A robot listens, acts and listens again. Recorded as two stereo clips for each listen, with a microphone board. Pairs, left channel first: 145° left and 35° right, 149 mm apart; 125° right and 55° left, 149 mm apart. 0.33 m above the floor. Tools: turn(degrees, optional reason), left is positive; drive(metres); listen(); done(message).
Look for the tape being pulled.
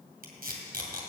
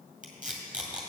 turn(degrees=-25, reason="The tape being pulled: 25° right.")
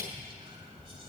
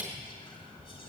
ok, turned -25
done("Facing the tape being pulled, 2 to 4 m away.")